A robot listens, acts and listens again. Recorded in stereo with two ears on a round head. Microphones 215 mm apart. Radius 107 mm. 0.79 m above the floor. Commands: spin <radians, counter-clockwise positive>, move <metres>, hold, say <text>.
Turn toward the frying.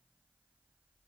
hold
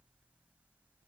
hold
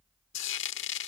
spin 0.96
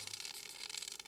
say Facing the frying.